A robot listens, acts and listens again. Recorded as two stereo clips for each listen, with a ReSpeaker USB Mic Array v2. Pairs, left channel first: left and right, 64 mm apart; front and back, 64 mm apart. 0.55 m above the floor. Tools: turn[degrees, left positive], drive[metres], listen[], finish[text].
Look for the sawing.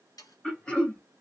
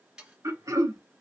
Thought: The sawing: 100° left.
Action: turn[100]
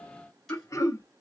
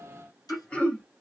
Action: listen[]
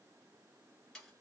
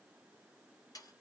Action: finish[Found it: sawing, straight ahead, 1 to 2 m away.]